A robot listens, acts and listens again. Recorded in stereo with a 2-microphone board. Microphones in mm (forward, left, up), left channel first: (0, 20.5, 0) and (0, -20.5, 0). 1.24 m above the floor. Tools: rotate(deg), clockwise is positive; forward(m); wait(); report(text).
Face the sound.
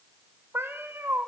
rotate(75)
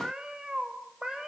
rotate(15)
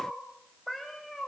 report("Found it: a cat meowing, straight ahead, over 4 m away.")